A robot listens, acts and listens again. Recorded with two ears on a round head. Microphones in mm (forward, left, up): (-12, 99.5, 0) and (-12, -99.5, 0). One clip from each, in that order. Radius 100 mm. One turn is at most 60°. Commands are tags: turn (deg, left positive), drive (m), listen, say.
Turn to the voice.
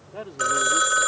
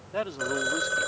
<turn deg="-60"/>
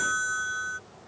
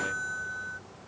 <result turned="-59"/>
<listen/>
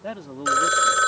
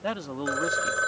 <turn deg="-30"/>
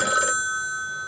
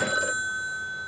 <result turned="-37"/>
<listen/>
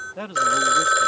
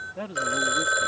<turn deg="30"/>
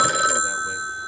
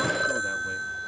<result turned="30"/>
<listen/>
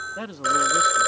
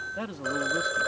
<turn deg="15"/>
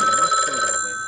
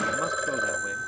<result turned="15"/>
<listen/>
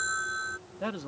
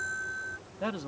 <say>Found it: a man speaking, straight ahead.</say>